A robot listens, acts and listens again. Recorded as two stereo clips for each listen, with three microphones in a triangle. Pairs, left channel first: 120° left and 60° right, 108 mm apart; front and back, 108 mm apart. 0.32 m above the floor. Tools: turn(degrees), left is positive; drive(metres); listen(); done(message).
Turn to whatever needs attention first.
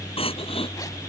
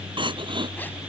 turn(degrees=145)
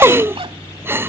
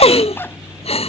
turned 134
turn(degrees=10)
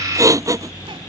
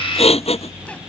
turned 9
done("Facing the crying.")